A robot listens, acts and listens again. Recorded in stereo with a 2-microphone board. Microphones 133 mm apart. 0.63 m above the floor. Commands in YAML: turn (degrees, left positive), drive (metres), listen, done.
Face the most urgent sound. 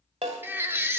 turn: -15
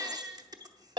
turn: -150
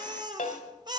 turn: -35
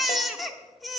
done: "Facing the baby crying, under 1 m away."